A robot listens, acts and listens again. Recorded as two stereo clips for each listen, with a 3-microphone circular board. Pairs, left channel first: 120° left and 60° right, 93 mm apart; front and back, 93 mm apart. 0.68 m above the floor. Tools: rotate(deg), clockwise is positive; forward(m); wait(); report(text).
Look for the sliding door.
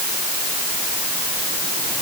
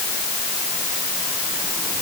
wait()
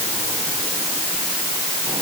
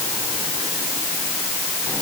wait()
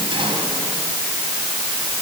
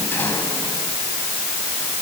report("I can't make out a sliding door.")